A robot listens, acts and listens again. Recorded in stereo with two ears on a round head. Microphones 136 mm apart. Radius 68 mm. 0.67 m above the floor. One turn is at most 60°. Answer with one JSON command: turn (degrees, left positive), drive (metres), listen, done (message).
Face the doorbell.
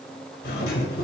{"turn": 60}
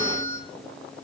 {"turn": 20}
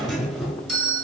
{"done": "Found it: a doorbell, straight ahead."}